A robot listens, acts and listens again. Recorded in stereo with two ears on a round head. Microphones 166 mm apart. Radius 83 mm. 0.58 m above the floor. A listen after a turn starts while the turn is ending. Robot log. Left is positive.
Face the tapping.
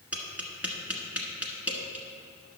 cmd yaw -30
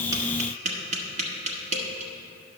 note: So it is at 140° right.
cmd yaw -140
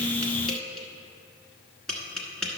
end: Found it: tapping, straight ahead, 1 to 2 m away.